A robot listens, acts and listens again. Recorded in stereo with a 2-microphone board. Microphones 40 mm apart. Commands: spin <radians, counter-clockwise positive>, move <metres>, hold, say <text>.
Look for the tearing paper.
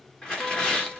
spin 0.35
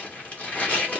spin 2.44
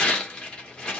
spin 0.35
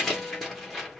say Found it: tearing paper, straight ahead.